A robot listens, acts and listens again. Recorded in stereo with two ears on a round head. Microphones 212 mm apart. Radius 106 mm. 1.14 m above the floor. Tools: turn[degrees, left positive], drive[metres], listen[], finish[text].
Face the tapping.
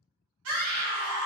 Action: listen[]
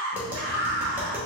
Action: turn[-30]
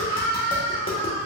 Action: listen[]
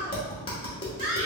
Thought: So it is at 25° left.
Action: turn[25]
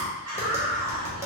Thought: The tapping is now 10° right.
Action: turn[-10]
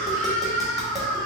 Action: listen[]
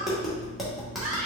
Action: finish[Found it: tapping, straight ahead, 1 to 2 m away.]